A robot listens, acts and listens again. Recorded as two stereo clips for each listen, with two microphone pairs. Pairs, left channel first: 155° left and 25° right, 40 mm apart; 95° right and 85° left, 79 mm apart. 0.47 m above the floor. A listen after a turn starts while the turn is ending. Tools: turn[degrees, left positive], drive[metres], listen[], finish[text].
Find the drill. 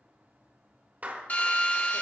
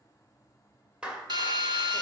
Thought: The drill: 105° left.
Action: turn[105]
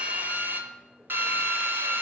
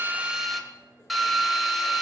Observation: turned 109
Action: finish[Facing the drill, under 1 m away.]